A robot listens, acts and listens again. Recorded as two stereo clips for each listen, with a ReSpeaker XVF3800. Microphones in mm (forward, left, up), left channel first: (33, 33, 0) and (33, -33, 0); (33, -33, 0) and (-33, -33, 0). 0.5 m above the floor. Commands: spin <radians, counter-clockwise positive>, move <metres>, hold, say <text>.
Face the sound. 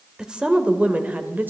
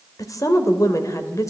spin -0.52
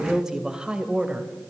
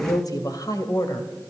spin -0.35
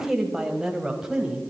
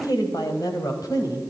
spin -0.17
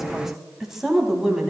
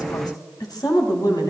spin -0.17
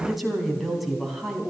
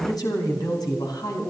say Found it: a woman speaking, straight ahead, 2 to 4 m away.